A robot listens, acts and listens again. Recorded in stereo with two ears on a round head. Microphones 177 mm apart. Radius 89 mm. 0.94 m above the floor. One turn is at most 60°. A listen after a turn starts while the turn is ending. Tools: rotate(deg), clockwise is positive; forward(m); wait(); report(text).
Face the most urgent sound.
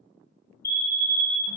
rotate(-30)
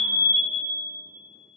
rotate(-60)
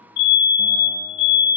rotate(-60)
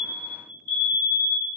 rotate(-60)
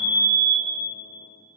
rotate(-30)
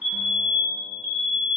report("Found it: a fire alarm, straight ahead, 2 to 4 m away.")